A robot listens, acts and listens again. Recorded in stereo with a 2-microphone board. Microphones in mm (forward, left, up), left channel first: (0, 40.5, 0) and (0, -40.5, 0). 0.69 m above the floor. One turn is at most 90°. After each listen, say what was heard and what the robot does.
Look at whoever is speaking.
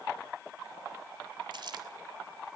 Keep listening.
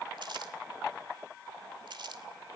Keep listening.
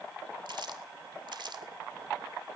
I can't make out anyone speaking, only crumpling.